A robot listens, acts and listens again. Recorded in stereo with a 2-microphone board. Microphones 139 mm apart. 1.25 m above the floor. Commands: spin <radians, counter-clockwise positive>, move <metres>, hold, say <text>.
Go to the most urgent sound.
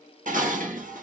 hold
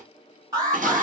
spin -0.44
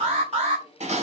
spin -2.27
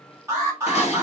spin -0.35
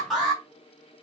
move 1.0
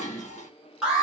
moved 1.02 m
move 1.0
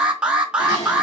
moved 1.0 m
move 1.0
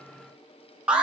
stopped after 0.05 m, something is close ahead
spin -0.17
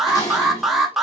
say I am next to the alarm.